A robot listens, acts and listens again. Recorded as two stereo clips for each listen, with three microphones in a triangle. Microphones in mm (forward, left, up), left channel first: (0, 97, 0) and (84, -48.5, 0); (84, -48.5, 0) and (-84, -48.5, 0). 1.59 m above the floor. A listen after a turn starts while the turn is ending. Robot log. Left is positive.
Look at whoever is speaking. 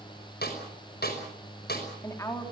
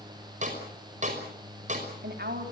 note: The woman speaking: 170° right.
cmd yaw -170
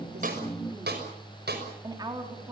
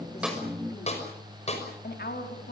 end: Facing the woman speaking, over 4 m away.